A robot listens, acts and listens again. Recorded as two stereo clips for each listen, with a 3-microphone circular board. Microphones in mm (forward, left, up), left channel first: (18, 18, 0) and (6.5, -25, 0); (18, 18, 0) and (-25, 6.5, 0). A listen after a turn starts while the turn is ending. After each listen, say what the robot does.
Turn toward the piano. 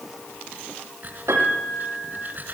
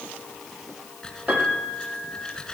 Turn 110° right.
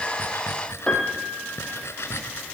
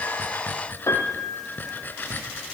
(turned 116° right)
Facing the piano.